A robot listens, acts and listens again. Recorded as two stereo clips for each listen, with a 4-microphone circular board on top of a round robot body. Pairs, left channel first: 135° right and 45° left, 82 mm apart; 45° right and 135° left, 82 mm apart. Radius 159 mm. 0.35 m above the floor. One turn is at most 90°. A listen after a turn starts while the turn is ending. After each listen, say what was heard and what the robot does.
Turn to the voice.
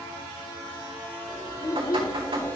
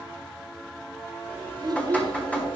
The child speaking: 175° left. Turn 90° left.
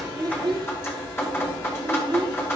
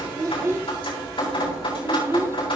The child speaking is now 75° left. Turn 75° left.
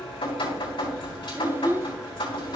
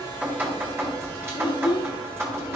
The child speaking is now 20° right. Turn 20° right.
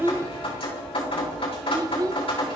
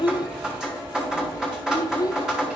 Facing the child speaking.